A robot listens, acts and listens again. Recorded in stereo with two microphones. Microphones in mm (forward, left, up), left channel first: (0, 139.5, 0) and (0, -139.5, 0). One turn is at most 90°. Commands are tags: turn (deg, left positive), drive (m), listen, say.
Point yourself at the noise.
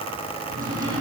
<turn deg="-30"/>
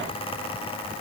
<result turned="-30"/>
<listen/>
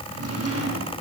<turn deg="-90"/>
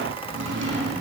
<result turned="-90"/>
<turn deg="-45"/>
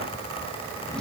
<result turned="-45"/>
<listen/>
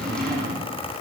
<say>Facing the drawer.</say>